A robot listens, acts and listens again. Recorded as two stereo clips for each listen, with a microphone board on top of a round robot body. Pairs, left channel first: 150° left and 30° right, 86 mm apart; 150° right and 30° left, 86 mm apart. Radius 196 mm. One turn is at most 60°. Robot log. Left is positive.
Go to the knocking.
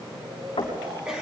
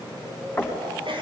note: The knocking: 140° left.
cmd yaw +60
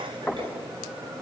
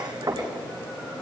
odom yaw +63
note: The knocking is now 75° left.
cmd yaw +60
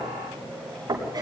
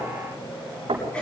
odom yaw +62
note: The knocking is now 15° left.
cmd yaw +15
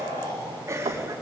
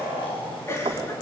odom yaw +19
cmd fwd 1.0
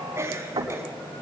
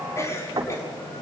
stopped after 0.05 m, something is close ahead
end: Blocked. The knocking is further on, straight ahead.